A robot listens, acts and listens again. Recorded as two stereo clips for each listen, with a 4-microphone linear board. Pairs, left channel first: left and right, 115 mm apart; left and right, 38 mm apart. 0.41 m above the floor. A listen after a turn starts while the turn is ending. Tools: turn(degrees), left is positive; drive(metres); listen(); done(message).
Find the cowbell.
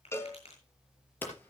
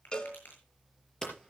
turn(degrees=25)
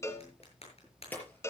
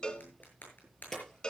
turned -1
turn(degrees=25)
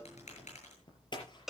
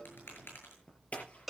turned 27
done("Found it: a cowbell, straight ahead.")